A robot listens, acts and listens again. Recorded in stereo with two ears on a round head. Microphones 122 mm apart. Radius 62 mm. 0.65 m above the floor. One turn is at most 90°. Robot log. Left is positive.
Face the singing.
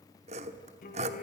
note: The singing: about 65° left or 115° left.
cmd yaw +65
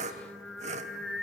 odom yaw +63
end: Found it: singing, straight ahead, 2 to 4 m away.